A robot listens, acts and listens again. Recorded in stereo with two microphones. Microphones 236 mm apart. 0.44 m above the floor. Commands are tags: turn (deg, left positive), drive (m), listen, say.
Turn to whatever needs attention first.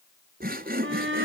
<turn deg="-55"/>
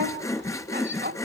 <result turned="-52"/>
<turn deg="-60"/>
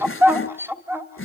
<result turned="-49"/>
<turn deg="-10"/>
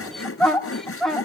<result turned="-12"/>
<say>Facing the shout.</say>